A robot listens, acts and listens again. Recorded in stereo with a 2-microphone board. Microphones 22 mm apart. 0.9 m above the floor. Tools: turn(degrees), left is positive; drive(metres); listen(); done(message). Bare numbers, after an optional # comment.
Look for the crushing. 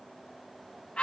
listen()
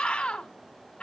listen()
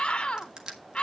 # The crushing: about 40° right or 140° right.
turn(-40)
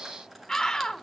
listen()
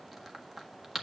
done("Found it: crushing, straight ahead.")